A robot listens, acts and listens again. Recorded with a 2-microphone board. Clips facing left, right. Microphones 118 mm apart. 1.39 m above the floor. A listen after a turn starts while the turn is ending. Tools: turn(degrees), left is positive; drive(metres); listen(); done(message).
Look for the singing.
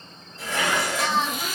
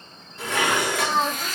turn(degrees=-45)
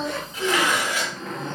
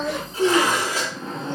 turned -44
turn(degrees=-85)
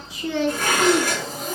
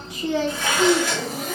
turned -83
turn(degrees=10)
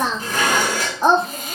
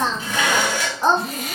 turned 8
turn(degrees=15)
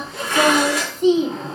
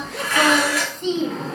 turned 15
turn(degrees=10)
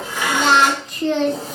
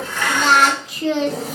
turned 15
done("Facing the singing.")